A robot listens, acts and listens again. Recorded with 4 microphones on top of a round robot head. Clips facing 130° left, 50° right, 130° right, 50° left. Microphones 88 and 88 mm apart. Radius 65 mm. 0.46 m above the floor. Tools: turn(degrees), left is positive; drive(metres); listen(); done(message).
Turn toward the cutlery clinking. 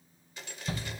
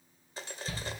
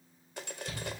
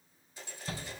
turn(degrees=-105)
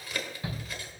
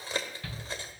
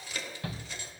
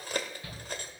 turn(degrees=10)
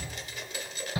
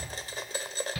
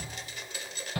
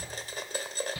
done("Facing the cutlery clinking, 1 to 2 m away.")